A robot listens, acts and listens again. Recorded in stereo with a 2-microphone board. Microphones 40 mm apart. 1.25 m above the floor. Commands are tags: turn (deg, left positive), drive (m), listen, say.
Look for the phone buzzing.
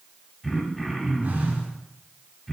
<turn deg="-40"/>
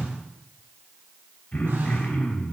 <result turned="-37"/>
<turn deg="-100"/>
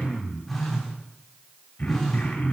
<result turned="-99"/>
<say>Facing the phone buzzing, 2 to 4 m away.</say>